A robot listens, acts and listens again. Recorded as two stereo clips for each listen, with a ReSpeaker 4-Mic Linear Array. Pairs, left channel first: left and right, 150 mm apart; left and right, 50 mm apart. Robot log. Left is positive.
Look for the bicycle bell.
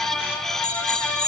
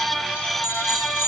note: The bicycle bell: about 45° left or 135° left.
cmd yaw +45
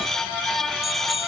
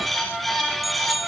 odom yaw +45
end: Found it: a bicycle bell, straight ahead.